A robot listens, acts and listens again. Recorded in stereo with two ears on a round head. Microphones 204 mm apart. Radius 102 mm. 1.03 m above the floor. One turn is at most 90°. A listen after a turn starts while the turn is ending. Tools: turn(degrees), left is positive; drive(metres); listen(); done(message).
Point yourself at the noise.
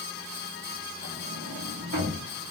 turn(degrees=-50)
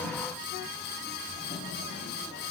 done("Facing the sliding door.")